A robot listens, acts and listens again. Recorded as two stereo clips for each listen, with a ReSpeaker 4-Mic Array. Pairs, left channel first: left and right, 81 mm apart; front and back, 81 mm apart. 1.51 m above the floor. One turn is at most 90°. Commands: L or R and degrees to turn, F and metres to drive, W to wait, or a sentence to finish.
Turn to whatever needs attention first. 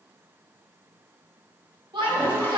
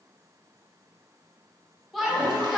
R90
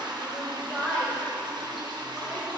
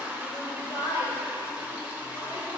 Found it: a shout, straight ahead, 1 to 2 m away.